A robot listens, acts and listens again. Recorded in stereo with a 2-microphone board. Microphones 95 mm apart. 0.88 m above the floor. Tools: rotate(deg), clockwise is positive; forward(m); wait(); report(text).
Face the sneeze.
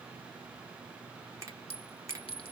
wait()
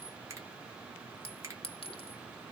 wait()
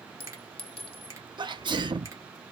rotate(50)
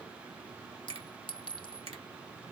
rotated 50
wait()
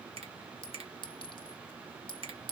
report("I heard a sneeze, but can't make it out now. It was about straight ahead or 80° right.")